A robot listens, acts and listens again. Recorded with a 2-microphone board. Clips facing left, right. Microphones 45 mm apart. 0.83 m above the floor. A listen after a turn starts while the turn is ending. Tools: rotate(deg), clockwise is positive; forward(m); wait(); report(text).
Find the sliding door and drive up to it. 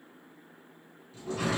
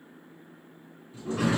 rotate(20)
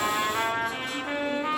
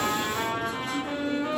wait()
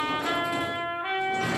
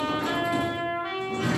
forward(1.0)
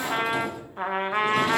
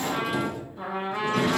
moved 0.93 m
forward(1.0)
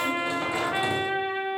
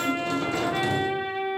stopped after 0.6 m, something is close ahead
rotate(-15)
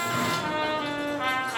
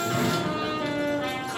report("I am next to the sliding door.")